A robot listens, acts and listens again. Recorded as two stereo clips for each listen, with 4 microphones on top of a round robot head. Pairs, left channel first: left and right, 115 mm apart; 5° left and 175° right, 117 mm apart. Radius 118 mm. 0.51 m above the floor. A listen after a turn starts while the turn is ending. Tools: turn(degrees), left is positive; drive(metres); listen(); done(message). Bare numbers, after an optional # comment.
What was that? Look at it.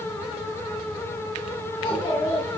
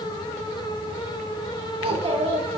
# The child speaking: 145° left.
turn(145)
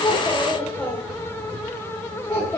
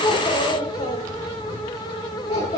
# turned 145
# The child speaking is now 30° left.
turn(30)
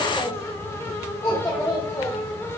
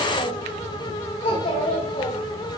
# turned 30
# The child speaking is now 25° left.
turn(25)
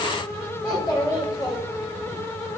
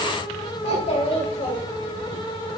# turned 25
# The child speaking is now 20° left.
turn(20)
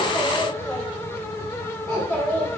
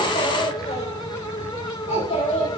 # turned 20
done("Facing the child speaking.")